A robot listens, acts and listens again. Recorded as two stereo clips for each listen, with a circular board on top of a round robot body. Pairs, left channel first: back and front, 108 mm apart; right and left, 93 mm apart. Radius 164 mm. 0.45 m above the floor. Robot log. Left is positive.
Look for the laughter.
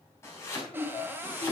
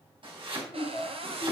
note: The laughter: straight behind.
cmd yaw +180
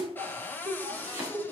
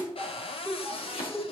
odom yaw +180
note: The laughter is now 15° left.
cmd yaw +15
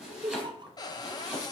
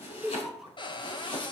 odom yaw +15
end: Found it: laughter, straight ahead.